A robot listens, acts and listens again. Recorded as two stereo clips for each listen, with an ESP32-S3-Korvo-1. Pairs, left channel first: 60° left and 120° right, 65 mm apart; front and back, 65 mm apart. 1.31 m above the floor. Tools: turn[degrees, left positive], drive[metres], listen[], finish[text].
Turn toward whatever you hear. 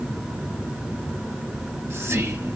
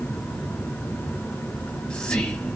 Thought: The whispering: 75° right.
Action: turn[-75]
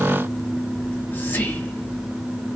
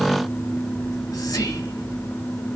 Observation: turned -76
Action: finish[Found it: whispering, straight ahead, 1 to 2 m away.]